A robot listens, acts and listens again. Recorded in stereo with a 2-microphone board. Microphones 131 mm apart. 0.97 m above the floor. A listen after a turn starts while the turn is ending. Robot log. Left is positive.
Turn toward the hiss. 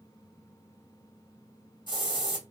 note: The hiss: about 35° left or 145° left.
cmd yaw +35
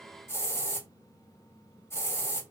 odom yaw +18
note: So it is at 20° left.
cmd yaw +20
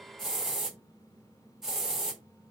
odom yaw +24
end: Facing the hiss.